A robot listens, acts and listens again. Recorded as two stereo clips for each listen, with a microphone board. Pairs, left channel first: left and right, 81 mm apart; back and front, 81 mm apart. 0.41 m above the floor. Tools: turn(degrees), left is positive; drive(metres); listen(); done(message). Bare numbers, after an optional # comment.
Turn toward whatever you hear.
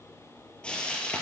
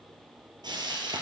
# The frying: 15° left.
turn(15)
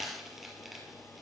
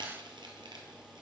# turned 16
done("Facing the frying, 1 to 2 m away.")